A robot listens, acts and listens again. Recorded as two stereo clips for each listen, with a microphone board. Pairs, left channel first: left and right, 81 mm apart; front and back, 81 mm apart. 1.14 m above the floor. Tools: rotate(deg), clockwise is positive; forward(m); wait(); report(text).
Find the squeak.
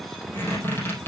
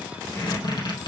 rotate(-30)
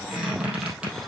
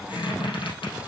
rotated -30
rotate(10)
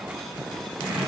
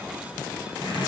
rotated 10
report("Facing the squeak.")